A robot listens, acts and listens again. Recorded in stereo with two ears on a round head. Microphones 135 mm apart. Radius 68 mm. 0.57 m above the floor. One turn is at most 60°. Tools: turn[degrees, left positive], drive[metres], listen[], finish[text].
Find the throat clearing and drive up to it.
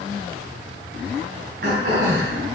Thought: The throat clearing: about 65° right or 115° right.
Action: turn[-60]
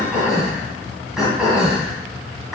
Action: drive[1.0]
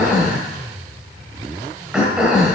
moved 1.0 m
Action: drive[1.0]
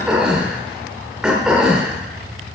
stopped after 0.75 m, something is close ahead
Action: finish[I am next to the throat clearing.]